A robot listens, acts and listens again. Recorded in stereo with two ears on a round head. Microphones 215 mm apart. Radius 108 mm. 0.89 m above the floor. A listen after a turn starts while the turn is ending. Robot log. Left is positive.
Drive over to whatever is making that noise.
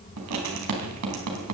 cmd yaw -90
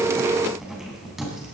cmd fwd 1.0
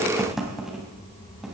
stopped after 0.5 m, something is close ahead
end: Something is in my way. I am facing the writing but have not reached it.